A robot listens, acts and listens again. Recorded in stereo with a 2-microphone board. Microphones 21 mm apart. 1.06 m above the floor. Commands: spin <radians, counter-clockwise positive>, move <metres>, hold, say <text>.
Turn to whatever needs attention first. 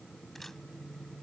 hold
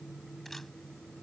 hold
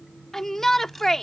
spin 0.35
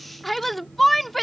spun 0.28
say Facing the shout.